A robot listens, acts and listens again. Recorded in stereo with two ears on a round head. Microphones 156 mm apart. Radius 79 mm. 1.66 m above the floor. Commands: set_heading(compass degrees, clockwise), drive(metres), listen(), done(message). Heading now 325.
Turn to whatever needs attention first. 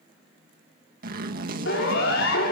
set_heading(235)
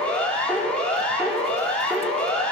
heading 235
done("Facing the siren, over 4 m away.")